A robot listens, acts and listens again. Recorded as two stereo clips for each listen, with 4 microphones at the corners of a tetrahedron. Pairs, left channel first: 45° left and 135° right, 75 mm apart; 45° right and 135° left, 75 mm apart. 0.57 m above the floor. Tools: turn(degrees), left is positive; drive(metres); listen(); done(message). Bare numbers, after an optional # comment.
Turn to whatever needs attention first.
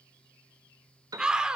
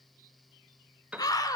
# The scream: 55° right.
turn(-55)
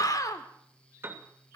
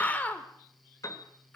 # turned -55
# The scream is now 20° left.
turn(20)
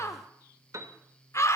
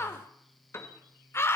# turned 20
done("Found it: a scream, straight ahead, 1 to 2 m away.")